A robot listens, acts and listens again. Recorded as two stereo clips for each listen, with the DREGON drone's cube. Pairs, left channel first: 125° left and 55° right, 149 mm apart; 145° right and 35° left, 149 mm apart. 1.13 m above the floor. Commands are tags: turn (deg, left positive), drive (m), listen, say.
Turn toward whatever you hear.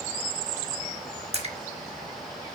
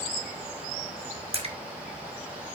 <turn deg="-15"/>
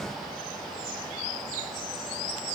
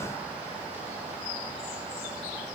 <say>I heard a splash from this way, but can't make it out now.</say>